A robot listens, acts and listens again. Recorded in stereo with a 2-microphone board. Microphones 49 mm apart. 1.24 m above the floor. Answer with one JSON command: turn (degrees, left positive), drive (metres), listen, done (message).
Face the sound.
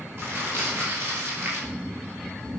{"turn": -55}
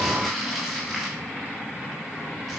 {"done": "Found it: crumpling, straight ahead, over 4 m away."}